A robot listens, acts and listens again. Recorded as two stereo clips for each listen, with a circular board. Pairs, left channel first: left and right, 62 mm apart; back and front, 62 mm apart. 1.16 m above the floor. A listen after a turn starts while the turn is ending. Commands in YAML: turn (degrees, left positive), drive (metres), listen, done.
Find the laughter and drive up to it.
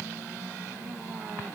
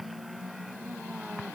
listen: true
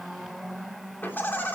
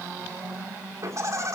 turn: 35
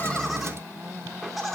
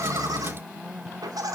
drive: 1.0
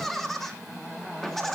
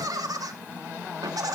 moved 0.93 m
drive: 1.0
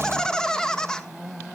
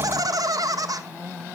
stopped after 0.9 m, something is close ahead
turn: 15
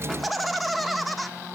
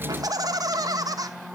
done: "I am next to the laughter."